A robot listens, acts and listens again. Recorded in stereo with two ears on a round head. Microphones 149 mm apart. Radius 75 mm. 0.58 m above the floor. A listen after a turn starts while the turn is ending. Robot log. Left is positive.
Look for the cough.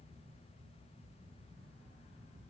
cmd idle
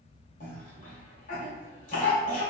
note: The cough: about 50° left or 130° left.
cmd yaw +50
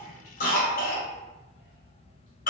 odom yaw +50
note: So it is at 65° left.
cmd yaw +65
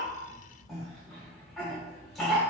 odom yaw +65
end: Facing the cough, 1 to 2 m away.